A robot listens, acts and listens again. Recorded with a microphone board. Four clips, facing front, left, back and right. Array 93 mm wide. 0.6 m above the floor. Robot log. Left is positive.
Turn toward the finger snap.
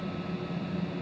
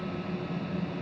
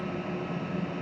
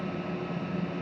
cmd idle
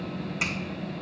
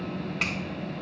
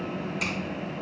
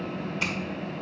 note: The finger snap: 70° left.
cmd yaw +70
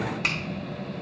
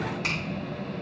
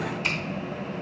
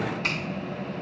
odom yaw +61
end: Found it: a finger snap, straight ahead, 2 to 4 m away.